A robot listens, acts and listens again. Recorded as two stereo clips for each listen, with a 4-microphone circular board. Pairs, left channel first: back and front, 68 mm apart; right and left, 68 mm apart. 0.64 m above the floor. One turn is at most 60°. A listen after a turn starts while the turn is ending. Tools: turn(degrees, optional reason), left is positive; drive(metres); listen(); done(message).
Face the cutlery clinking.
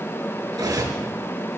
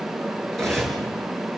done("Found it: cutlery clinking, straight ahead, over 4 m away.")